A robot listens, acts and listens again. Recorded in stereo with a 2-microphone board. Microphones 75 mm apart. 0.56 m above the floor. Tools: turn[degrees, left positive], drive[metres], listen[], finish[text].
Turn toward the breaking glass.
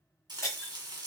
Thought: The breaking glass: about 40° left or 140° left.
Action: turn[40]
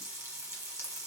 Action: listen[]
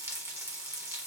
Action: finish[I heard breaking glass, but can't make it out now. It was about straight ahead or 100° left.]